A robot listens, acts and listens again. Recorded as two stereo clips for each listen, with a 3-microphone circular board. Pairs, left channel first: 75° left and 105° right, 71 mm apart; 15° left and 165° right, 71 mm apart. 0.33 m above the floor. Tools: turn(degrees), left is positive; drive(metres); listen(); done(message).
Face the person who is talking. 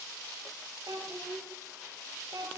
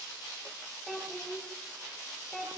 turn(degrees=-70)
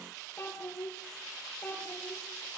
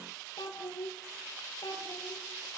turn(degrees=15)
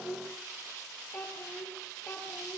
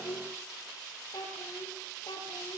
turn(degrees=10)
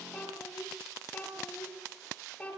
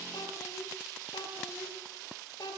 done("Found it: a child speaking, straight ahead.")